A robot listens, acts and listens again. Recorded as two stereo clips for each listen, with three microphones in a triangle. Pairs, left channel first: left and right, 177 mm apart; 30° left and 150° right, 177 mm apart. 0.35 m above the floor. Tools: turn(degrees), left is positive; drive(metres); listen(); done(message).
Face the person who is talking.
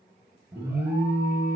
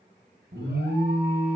listen()
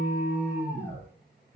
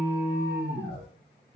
listen()
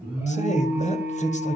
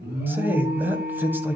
turn(degrees=130)
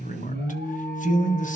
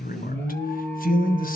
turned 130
turn(degrees=55)
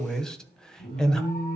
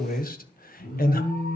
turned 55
done("Found it: a man speaking, straight ahead.")